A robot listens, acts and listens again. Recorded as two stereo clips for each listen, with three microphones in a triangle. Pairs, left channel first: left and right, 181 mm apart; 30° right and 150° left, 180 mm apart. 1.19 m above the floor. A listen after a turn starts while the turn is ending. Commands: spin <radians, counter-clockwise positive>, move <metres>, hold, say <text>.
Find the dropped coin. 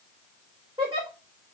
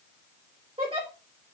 hold
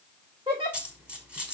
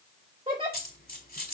say Found it: a dropped coin, straight ahead.